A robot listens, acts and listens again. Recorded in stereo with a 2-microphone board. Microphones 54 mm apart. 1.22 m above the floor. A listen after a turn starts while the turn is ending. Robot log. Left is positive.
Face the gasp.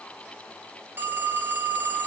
cmd idle
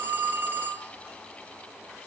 cmd idle
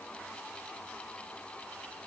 end: I can't make out a gasp to turn to.